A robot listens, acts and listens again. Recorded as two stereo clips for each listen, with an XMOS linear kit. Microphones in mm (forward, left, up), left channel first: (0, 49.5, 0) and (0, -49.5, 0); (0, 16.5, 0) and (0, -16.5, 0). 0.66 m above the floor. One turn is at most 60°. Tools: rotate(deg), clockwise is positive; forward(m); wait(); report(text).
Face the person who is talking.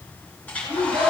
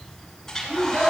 rotate(60)
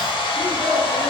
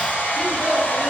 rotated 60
rotate(25)
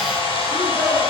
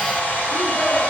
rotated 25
wait()
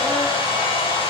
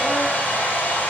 wait()
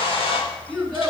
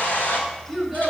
report("Found it: a child speaking, straight ahead.")